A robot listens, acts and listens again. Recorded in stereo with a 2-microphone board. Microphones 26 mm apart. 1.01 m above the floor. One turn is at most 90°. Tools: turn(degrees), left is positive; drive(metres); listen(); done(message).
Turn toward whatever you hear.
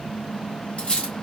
turn(degrees=40)
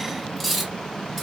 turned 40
done("Found it: cutlery clinking, straight ahead, 1 to 2 m away.")